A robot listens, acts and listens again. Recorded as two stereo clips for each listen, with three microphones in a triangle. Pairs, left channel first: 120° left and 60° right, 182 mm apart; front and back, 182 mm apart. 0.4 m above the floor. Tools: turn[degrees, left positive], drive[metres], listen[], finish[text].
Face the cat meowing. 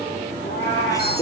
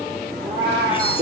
Thought: The cat meowing: 115° left.
Action: turn[115]
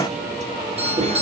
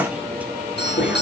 Action: listen[]
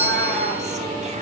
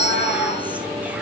Action: listen[]
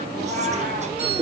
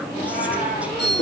Thought: The cat meowing is now 35° right.
Action: turn[-35]
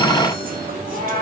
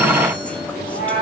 Thought: The cat meowing is now 20° right.
Action: turn[-20]
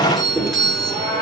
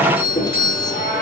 Action: finish[Found it: a cat meowing, straight ahead.]